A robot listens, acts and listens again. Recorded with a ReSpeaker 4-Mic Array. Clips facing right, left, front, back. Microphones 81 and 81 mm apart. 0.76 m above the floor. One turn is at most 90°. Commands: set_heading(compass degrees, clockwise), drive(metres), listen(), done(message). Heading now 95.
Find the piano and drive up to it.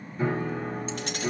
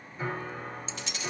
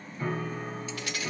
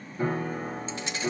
set_heading(5)
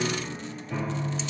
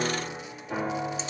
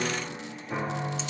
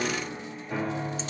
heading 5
set_heading(295)
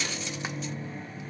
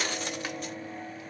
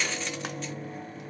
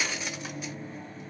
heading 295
set_heading(260)
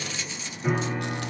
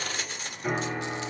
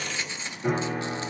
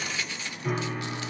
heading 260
drive(1.0)
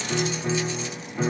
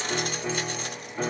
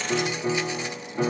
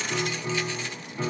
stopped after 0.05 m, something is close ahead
done("Blocked. The piano is further on, straight ahead.")